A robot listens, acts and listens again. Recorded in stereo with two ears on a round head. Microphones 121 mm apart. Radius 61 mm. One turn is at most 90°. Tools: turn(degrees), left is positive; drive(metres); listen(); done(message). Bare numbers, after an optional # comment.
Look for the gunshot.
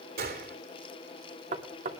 # The gunshot: about 75° right or 105° right.
turn(-75)
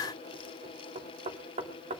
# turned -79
listen()
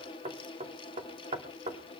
done("I heard a gunshot, but can't make it out now. It was about 5° left or 30° right.")